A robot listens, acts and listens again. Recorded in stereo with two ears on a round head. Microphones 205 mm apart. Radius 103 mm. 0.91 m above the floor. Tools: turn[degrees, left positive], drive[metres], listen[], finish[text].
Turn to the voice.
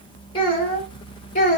Thought: The child speaking: about 35° left or 145° left.
Action: turn[35]
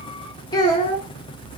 Thought: The child speaking: about 25° left or 155° left.
Action: turn[25]
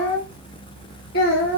Thought: The child speaking: about 50° left or 130° left.
Action: turn[50]
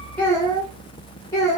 Thought: So it is at 15° left.
Action: turn[15]
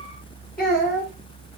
Action: finish[Found it: a child speaking, straight ahead, 2 to 4 m away.]